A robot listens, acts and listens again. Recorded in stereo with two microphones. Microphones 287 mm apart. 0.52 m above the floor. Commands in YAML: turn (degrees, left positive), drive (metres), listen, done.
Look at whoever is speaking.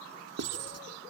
listen: true
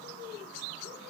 listen: true
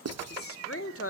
turn: 50
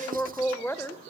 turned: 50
turn: 10
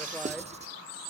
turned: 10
listen: true
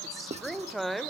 done: "Found it: a woman speaking, straight ahead, 1 to 2 m away."